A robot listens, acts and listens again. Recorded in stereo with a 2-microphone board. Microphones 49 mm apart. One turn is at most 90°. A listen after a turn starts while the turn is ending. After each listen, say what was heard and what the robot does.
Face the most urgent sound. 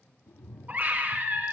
The scream: about 35° right or 145° right. Turn 35° right.
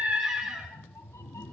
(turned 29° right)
So it is at 10° right. Turn 10° right.
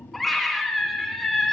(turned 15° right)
Found it: a scream, straight ahead, over 4 m away.